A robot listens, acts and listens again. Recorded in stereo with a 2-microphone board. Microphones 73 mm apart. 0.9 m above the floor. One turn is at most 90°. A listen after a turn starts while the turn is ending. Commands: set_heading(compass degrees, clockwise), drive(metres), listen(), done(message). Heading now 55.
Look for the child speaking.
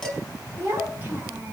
set_heading(80)
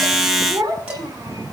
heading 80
set_heading(170)
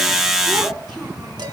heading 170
set_heading(245)
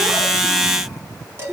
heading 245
set_heading(255)
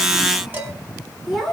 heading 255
done("Found it: a child speaking, straight ahead, over 4 m away.")